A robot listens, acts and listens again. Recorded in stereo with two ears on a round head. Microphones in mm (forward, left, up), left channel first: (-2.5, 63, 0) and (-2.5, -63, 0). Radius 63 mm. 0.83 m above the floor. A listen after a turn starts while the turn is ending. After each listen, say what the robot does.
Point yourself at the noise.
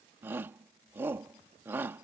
Turn 30° right.
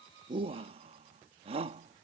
Turn 135° right.
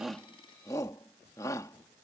Turn 25° left.
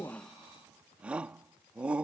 Turn 10° right.
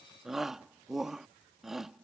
Facing the shout.